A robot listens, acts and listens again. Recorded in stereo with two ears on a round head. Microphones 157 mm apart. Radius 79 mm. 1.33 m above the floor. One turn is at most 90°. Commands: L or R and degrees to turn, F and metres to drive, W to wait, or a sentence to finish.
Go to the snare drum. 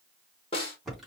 L35
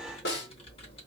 L90
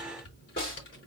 L20
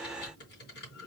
W
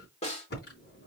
L35
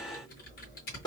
L20
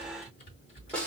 F1.0
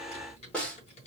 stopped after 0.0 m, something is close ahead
Blocked. The snare drum is further on, straight ahead.